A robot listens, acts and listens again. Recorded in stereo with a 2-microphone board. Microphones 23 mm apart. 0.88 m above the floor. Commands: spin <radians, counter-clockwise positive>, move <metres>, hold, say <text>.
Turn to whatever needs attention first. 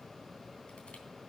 hold
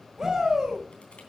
spin -0.26
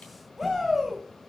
say Facing the shout.